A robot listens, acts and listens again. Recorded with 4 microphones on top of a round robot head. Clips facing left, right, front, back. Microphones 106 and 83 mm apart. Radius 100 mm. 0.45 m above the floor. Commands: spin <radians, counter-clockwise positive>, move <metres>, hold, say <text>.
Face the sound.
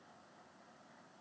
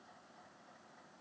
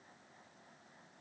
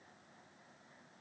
hold
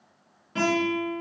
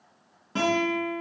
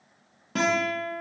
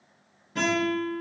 spin -0.44
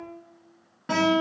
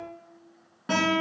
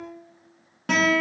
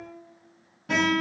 say Facing the guitar.